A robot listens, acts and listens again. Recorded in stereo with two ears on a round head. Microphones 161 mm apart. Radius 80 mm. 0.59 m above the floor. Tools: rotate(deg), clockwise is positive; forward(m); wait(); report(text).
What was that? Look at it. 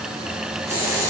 rotate(20)
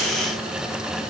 wait()
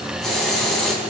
report("Facing the hiss.")